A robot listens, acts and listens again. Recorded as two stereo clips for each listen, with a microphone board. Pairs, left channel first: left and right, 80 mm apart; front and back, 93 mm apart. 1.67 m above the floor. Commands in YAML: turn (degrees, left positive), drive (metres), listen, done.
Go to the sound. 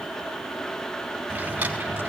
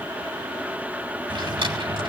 turn: -160
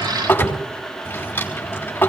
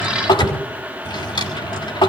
turn: 25
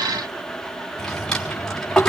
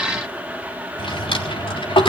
drive: 1.0
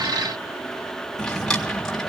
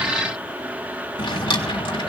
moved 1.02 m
turn: 10
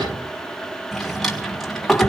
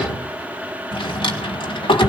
drive: 1.0
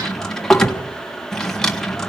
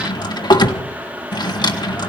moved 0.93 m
turn: 10
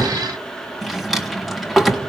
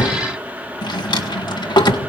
drive: 1.0
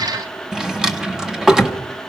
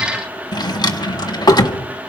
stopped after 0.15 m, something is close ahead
turn: -10
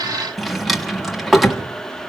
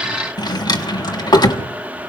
done: "I am next to the drawer."